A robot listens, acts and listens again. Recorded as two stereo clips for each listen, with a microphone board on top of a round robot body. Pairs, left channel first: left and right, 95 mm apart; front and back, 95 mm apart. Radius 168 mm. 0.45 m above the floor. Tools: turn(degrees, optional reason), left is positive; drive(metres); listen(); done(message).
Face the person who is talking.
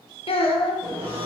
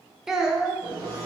turn(degrees=95, reason="The child speaking: 95° left.")
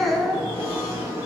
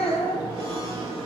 done("Found it: a child speaking, straight ahead.")